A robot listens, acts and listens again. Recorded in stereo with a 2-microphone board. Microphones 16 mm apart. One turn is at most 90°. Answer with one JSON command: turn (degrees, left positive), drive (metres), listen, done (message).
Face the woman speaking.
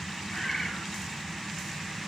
{"listen": true}
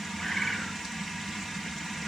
{"listen": true}
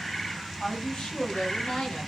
{"turn": 70}
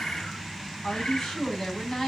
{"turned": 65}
{"turn": 40}
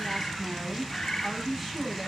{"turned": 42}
{"done": "Facing the woman speaking."}